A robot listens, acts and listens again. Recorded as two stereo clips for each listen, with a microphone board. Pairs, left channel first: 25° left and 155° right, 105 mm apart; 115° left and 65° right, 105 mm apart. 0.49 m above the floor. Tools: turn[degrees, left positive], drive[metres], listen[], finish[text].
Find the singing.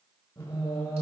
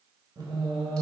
Thought: The singing: 35° right.
Action: turn[-35]
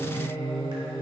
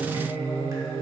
Thought: The singing is now 25° right.
Action: turn[-25]
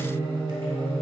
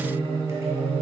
Thought: The singing is now 50° right.
Action: turn[-50]
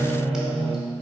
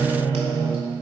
Thought: The singing is now 20° right.
Action: turn[-20]
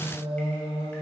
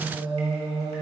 Thought: The singing is now 15° right.
Action: turn[-15]
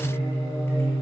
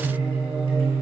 Action: finish[Found it: singing, straight ahead, 1 to 2 m away.]